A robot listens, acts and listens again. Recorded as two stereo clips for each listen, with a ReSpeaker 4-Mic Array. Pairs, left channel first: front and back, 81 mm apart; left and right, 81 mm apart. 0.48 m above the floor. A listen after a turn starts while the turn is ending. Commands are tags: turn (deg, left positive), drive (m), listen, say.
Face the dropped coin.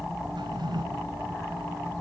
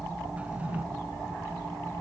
<listen/>
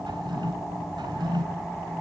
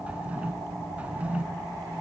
<listen/>
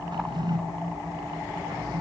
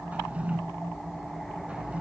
<say>I can't make out a dropped coin to turn to.</say>